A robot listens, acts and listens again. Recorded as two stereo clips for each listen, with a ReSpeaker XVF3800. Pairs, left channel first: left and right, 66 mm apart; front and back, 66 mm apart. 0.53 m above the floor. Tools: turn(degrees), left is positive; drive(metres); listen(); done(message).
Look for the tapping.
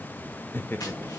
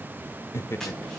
turn(degrees=85)
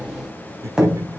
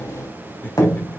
turn(degrees=-15)
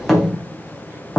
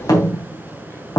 done("Found it: tapping, straight ahead, 2 to 4 m away.")